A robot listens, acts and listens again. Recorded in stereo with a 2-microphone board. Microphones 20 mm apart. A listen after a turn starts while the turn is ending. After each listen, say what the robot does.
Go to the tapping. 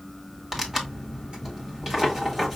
Keep listening.
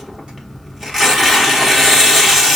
Keep listening.
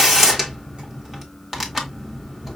I can't make out tapping, only tearing paper.